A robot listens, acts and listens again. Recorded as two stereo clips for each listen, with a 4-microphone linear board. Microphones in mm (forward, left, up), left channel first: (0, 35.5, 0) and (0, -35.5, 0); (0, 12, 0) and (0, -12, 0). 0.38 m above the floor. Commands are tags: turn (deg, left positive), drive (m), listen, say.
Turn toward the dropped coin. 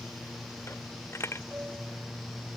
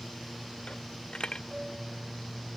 <turn deg="40"/>
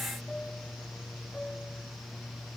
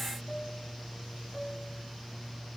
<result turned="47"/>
<listen/>
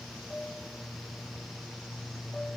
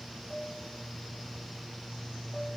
<say>I heard a dropped coin, but can't make it out now. It was about 5° right or 90° left.</say>